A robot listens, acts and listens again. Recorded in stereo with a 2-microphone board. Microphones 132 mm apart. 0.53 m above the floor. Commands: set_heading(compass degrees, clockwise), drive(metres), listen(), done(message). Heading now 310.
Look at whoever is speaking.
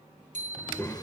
set_heading(295)
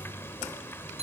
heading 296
set_heading(146)
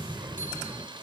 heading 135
set_heading(145)
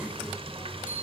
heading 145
done("Found it: a child speaking, straight ahead.")